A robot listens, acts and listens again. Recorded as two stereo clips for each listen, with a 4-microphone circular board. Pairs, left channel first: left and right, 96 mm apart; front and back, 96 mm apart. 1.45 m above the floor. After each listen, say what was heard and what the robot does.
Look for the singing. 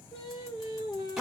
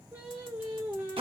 The singing: 110° left. Turn 110° left.
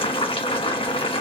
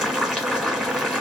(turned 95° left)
Nothing new. It was at 15° left. Turn 15° left.
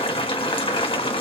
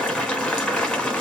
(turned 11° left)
Keep listening.
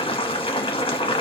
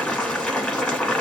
I heard singing from this way, but can't make it out now.